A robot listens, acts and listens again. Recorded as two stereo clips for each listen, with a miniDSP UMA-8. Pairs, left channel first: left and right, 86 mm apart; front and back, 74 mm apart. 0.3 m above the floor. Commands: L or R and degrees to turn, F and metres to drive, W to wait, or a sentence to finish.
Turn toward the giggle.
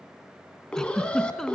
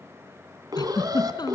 Found it: a giggle, straight ahead, 1 to 2 m away.